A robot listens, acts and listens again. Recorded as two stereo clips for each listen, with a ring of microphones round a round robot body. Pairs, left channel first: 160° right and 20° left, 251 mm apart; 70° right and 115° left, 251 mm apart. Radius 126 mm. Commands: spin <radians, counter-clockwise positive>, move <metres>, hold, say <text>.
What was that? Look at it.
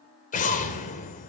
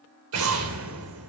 spin 2.44
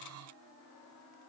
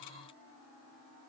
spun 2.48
say I heard an explosion from this way, but can't make it out now.